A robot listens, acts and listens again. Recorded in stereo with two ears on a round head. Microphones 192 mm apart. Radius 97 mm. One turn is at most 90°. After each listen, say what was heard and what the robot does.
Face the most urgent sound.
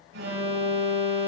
The alarm: about 55° right or 125° right. Turn 55° right.
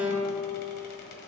So it is at 10° right. Turn 10° right.
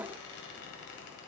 Keep listening.
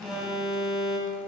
Found it: an alarm, straight ahead.